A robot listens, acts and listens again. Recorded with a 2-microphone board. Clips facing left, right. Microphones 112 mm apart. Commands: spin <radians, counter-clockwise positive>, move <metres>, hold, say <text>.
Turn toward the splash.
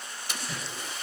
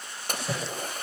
spin -0.87
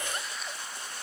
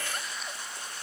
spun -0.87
hold
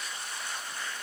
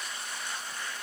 say I heard a splash, but can't make it out now. It was about straight ahead or 80° right.